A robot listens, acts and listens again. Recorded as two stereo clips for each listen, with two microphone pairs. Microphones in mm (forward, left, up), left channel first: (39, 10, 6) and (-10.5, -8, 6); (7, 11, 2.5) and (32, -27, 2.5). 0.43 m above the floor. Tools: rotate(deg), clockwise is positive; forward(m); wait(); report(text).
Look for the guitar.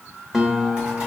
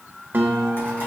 rotate(75)
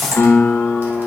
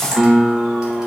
rotate(-20)
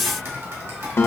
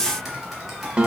report("Found it: a guitar, straight ahead.")